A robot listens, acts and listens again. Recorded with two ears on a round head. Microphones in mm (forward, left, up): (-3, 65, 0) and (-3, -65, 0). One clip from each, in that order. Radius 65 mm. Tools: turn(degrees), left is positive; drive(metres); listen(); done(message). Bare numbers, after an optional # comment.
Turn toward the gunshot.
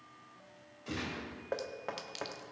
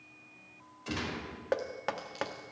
# The gunshot: about 35° right or 145° right.
turn(-35)
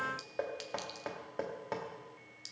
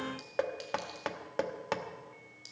listen()
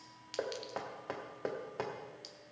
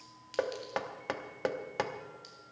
done("I heard a gunshot, but can't make it out now. It was about straight ahead or 110° right.")